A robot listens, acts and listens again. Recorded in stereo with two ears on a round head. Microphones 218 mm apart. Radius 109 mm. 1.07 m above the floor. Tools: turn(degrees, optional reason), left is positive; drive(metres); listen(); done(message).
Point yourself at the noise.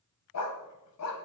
turn(degrees=65, reason="The dog barking: about 65° left or 115° left.")
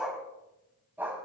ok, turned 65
turn(degrees=-10, reason="So it is at 10° right.")
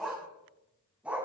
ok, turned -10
done("Facing the dog barking.")